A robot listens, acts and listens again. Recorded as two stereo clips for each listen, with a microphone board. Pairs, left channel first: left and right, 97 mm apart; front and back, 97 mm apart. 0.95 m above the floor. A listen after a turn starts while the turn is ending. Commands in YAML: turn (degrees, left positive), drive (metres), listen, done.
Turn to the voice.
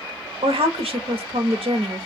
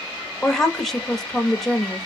turn: -90
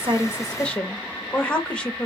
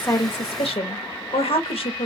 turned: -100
turn: 15
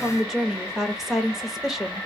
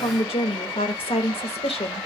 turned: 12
done: "Facing the woman speaking, under 1 m away."